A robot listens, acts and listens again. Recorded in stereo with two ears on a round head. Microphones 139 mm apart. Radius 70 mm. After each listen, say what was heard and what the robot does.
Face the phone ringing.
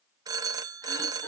The phone ringing: about 25° right or 155° right. Turn 25° right.
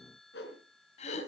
Keep listening.
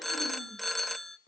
Facing the phone ringing.